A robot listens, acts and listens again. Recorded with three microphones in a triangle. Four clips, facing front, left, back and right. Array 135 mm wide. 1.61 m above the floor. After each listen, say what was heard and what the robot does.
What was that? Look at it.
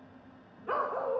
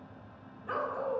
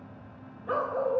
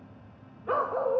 The dog barking: 65° right. Turn 65° right.
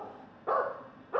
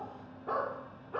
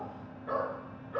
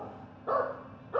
The dog barking is now 15° right. Turn 15° right.
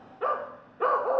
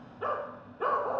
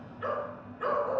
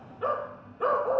Found it: a dog barking, straight ahead.